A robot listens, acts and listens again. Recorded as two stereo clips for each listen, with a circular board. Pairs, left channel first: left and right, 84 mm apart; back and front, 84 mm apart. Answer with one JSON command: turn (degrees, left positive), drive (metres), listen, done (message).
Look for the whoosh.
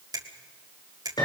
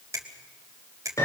{"listen": true}
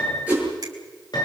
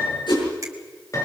{"turn": -160}
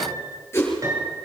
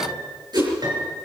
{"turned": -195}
{"turn": 35}
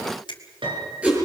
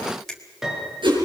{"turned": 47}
{"turn": -15}
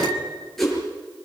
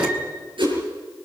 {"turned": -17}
{"done": "Facing the whoosh."}